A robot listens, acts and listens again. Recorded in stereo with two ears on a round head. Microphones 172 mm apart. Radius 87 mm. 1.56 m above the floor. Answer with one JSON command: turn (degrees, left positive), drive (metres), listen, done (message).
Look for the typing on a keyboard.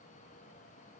{"listen": true}
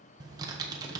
{"turn": -20}
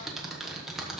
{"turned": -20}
{"done": "Found it: typing on a keyboard, straight ahead, 1 to 2 m away."}